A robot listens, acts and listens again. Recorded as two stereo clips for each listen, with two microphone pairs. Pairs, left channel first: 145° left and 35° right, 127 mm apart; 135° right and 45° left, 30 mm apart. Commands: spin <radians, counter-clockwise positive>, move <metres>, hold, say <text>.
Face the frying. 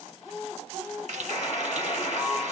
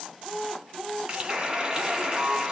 spin -0.26
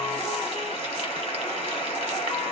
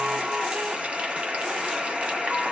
hold
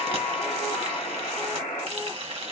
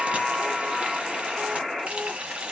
say Found it: frying, straight ahead, 1 to 2 m away.